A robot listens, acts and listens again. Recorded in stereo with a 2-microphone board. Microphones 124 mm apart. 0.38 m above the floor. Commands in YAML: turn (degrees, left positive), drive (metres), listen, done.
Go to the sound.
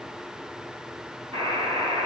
turn: -60
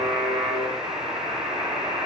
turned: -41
turn: -75
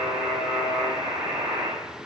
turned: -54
turn: -20
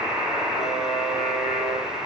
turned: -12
turn: -10
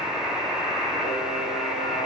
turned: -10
drive: 1.0
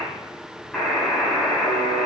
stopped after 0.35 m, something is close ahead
done: "Blocked. The buzzer is further on, straight ahead."